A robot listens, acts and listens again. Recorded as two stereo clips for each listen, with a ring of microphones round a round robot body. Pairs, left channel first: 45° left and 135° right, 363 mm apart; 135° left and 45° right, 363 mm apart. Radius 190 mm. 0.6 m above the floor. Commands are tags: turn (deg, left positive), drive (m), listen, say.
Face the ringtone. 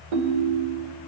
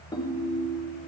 <turn deg="-145"/>
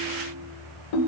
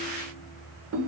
<turn deg="10"/>
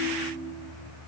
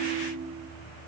<say>Found it: a ringtone, straight ahead, 1 to 2 m away.</say>